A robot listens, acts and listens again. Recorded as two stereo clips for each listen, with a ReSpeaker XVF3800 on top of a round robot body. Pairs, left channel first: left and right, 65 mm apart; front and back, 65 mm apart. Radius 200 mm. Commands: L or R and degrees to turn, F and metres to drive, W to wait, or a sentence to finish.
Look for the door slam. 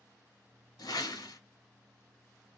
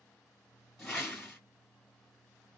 W
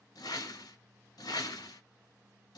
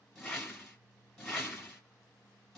W
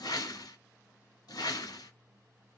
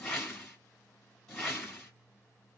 I can't make out a door slam to turn to.